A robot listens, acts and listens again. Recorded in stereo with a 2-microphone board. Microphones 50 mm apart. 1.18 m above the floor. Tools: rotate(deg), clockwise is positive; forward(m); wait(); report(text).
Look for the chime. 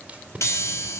rotate(-70)
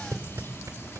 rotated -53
rotate(-55)
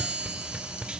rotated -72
rotate(15)
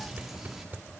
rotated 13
report("Facing the chime, 2 to 4 m away.")